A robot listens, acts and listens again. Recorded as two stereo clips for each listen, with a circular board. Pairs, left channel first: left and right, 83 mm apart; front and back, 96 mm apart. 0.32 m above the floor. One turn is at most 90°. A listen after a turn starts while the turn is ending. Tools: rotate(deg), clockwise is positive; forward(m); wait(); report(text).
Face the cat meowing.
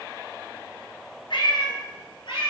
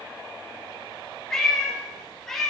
rotate(-85)
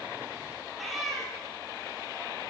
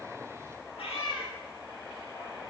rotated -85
report("Found it: a cat meowing, straight ahead, 2 to 4 m away.")